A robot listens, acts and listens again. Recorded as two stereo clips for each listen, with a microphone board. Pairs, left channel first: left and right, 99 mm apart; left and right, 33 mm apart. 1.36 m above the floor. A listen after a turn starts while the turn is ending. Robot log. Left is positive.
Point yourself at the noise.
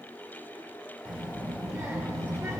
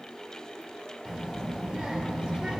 note: The child speaking: about 30° right or 150° right.
cmd yaw -30
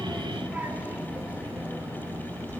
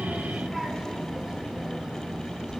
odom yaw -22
note: The child speaking: about 30° right or 150° right.
cmd yaw -30
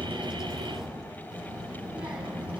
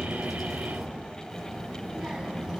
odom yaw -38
note: So it is at 15° right.
cmd yaw -15
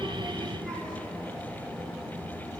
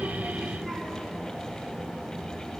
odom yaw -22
end: Found it: a child speaking, straight ahead.